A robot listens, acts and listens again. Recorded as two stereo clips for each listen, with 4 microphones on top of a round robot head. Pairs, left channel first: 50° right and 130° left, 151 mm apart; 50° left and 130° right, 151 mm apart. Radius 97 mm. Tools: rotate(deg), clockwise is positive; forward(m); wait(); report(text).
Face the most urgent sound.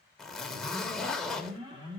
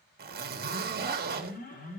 rotate(-70)
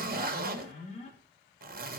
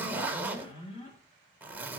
report("Facing the alarm, 2 to 4 m away.")